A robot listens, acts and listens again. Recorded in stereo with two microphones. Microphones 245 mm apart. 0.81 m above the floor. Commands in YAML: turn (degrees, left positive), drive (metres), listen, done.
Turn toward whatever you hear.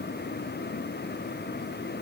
listen: true
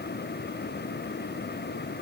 listen: true
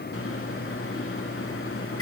turn: 65
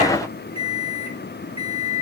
turn: 25
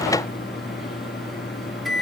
done: "Found it: a microwave, straight ahead, 1 to 2 m away."